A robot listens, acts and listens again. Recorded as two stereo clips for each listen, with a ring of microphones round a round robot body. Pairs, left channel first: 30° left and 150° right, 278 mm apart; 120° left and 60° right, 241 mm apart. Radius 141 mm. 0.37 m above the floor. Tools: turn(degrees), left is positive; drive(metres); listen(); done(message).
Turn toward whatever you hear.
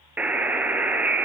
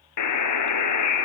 turn(degrees=125)
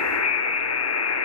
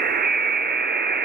turn(degrees=-10)
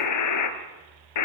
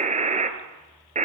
done("Facing the buzzer, 1 to 2 m away.")